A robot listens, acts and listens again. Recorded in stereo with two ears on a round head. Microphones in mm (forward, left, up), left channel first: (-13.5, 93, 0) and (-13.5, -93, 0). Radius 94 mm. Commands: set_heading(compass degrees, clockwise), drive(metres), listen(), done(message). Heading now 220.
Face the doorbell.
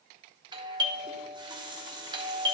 set_heading(240)
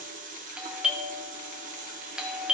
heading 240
done("Facing the doorbell.")